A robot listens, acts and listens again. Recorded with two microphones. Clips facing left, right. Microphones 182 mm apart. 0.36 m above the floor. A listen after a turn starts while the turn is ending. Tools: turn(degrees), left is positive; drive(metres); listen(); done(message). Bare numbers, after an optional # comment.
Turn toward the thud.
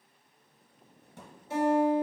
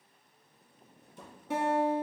# The thud: about 75° left or 105° left.
turn(75)
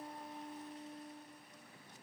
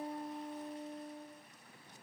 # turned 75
listen()
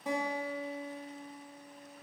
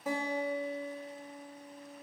done("I heard a thud, but can't make it out now. It was about straight ahead or 30° left.")